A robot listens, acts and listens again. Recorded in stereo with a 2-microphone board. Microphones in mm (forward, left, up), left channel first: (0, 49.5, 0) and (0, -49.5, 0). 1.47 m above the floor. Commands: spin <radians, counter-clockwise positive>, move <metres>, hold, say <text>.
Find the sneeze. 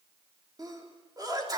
spin -0.70
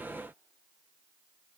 hold
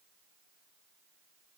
say I heard a sneeze, but can't make it out now. It was about straight ahead or 100° right.